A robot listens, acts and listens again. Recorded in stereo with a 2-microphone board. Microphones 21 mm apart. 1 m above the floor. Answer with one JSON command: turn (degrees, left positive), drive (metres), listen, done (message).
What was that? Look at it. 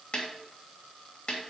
{"turn": 45}
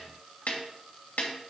{"turn": 90}
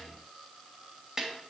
{"turn": -25}
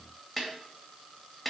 {"done": "Facing the snare drum."}